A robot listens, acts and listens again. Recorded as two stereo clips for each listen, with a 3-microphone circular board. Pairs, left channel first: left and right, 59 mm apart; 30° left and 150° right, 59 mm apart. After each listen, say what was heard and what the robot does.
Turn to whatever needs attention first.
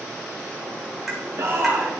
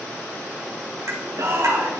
The shout: 130° right. Turn 130° right.
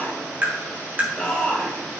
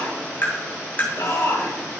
The shout is now 20° left. Turn 20° left.
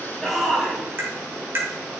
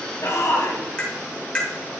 Facing the shout.